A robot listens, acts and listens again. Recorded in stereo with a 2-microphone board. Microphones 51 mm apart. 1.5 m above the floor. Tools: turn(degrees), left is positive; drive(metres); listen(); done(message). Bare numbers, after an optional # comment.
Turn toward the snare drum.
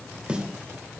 # The snare drum: about 25° right or 155° right.
turn(-25)
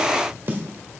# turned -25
# So it is at 125° right.
turn(-125)
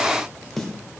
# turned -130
done("Facing the snare drum, 1 to 2 m away.")